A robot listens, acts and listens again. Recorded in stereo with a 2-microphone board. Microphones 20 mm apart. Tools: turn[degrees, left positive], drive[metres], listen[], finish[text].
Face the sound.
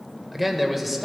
Action: turn[-30]
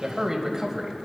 Thought: So it is at 145° right.
Action: turn[-145]
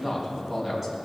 Action: finish[Facing the man speaking, 2 to 4 m away.]